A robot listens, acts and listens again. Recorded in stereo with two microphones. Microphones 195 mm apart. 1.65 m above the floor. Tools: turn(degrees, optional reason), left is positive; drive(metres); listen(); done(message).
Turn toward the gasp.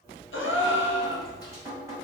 turn(degrees=90)
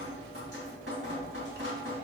done("I heard a gasp from this way, but can't make it out now.")